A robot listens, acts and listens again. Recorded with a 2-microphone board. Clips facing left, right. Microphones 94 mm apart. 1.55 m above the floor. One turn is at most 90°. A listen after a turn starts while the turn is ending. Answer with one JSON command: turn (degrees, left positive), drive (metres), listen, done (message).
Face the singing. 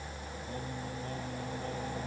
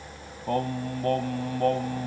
{"turn": -75}
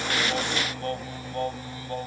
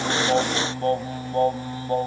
{"turn": -35}
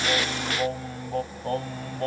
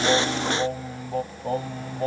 {"done": "Facing the singing."}